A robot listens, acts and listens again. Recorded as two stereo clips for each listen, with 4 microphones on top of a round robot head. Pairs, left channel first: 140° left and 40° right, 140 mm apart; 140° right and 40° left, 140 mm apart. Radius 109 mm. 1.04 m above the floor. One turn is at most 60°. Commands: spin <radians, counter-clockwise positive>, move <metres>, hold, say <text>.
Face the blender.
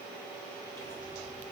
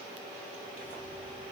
hold
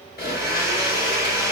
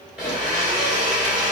spin 1.05
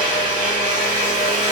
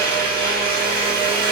spin 0.70
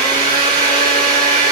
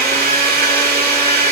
spin 0.35
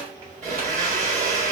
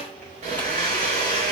say Found it: a blender, straight ahead, 1 to 2 m away.